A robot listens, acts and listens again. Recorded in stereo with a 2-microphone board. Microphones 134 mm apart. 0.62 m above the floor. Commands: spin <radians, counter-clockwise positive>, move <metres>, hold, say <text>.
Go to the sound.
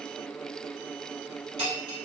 spin -0.79
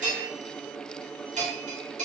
spin -1.48
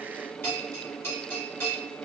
spin 0.35
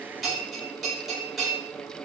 move 1.0
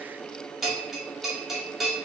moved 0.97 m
move 1.0
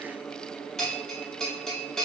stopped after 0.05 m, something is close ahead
say Arrived at the bell, straight ahead.